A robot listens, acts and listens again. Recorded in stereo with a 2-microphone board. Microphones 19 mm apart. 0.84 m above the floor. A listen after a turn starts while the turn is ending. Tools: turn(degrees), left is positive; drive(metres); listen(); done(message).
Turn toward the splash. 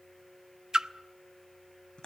turn(degrees=-50)
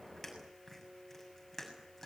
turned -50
listen()
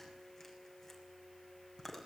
done("I heard a splash, but can't make it out now. It was about straight ahead or 80° right.")